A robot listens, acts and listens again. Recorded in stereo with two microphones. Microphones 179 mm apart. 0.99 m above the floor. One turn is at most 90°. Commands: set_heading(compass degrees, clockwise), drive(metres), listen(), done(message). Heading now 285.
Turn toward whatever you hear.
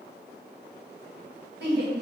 set_heading(355)
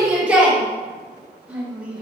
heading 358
done("Found it: a shout, straight ahead, 1 to 2 m away.")